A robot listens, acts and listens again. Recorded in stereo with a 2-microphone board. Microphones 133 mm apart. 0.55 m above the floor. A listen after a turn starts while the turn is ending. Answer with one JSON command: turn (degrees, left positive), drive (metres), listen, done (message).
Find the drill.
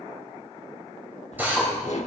{"turn": -30}
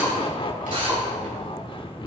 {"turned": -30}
{"turn": -135}
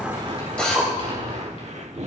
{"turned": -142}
{"turn": 10}
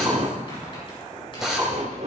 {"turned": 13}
{"done": "Found it: a drill, straight ahead."}